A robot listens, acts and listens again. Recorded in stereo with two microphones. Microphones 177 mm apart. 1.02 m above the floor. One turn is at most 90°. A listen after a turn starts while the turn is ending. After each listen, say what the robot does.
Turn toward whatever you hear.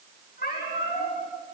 Turn 55° left.
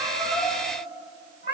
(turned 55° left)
Turn 75° left.
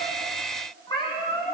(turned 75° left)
Turn 30° left.
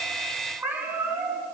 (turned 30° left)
Turn 10° right.
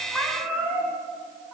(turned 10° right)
Found it: a cat meowing, straight ahead.